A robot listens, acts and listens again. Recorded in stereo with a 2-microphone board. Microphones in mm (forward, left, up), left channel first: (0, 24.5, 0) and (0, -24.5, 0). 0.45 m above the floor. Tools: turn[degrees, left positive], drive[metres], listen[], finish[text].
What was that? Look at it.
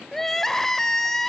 Action: turn[30]
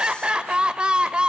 Thought: So it is at 20° right.
Action: turn[-20]
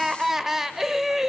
Action: finish[Found it: crying, straight ahead.]